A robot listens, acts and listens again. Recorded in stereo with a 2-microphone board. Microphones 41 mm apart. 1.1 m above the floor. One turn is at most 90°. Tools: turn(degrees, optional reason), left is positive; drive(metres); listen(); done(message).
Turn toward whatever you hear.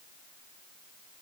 listen()
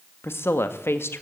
turn(degrees=75, reason="The woman speaking: about 75° left or 105° left.")
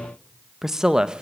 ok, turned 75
turn(degrees=-20, reason="So it is at 20° right.")
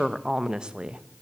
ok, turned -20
turn(degrees=-25, reason="The woman speaking is now 25° right.")
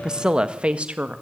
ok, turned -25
turn(degrees=-35, reason="The woman speaking is now 35° right.")
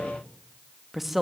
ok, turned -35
done("Found it: a woman speaking, straight ahead.")